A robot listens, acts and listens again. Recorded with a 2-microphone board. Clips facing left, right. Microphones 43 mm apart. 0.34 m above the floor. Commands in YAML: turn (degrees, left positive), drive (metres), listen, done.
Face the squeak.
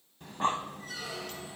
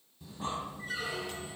turn: -30
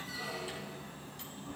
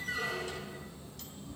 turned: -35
turn: -115
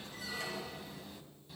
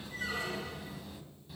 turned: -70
turn: -45
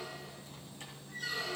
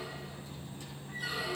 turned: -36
turn: -10
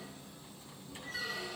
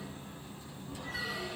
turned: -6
done: "Facing the squeak."